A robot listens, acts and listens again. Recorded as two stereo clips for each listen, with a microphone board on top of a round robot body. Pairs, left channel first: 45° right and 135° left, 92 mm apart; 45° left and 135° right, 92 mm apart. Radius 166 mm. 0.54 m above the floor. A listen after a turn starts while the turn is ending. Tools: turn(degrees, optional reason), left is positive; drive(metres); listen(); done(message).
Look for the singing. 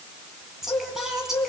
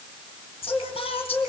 turn(degrees=50, reason="The singing: 50° left.")
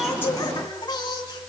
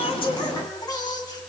done("Facing the singing.")